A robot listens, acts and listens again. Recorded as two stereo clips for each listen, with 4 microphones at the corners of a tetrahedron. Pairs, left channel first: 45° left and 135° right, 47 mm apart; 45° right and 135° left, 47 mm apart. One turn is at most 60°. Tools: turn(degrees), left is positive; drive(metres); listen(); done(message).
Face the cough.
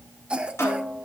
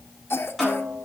turn(degrees=-60)
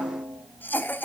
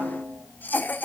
done("Found it: a cough, straight ahead.")